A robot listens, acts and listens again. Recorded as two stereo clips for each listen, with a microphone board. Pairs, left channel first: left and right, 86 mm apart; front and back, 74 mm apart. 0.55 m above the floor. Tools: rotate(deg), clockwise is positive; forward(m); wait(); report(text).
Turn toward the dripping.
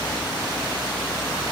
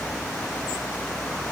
wait()
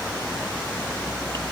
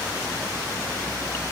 wait()
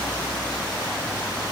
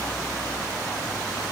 report("I can't make out dripping to turn to.")